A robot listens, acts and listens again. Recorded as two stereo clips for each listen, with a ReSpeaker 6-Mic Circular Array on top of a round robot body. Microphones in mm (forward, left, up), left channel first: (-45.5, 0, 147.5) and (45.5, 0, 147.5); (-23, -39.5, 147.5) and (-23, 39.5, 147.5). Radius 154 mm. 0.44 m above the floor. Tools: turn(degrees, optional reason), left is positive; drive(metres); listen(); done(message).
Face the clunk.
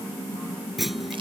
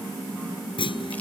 turn(degrees=-90, reason="The clunk: 90° right.")
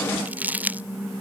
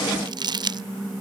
done("Facing where the clunk came from. I can't hear it now.")